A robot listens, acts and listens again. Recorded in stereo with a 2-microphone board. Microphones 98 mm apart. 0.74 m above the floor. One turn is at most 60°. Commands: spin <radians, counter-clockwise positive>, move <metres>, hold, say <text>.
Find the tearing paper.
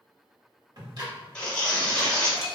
spin 0.52
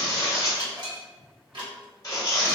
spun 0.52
spin 1.05
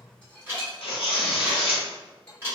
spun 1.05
spin 1.05
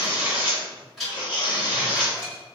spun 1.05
spin 0.87
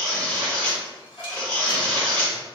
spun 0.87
spin 0.17
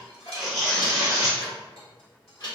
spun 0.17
say Found it: tearing paper, straight ahead.